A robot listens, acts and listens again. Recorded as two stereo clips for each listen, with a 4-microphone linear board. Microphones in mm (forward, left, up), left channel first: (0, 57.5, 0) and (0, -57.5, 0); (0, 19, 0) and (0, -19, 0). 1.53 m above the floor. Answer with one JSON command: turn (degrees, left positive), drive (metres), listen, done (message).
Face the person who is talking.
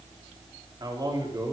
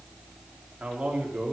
{"turn": -35}
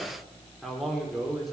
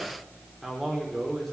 {"done": "Found it: a man speaking, straight ahead."}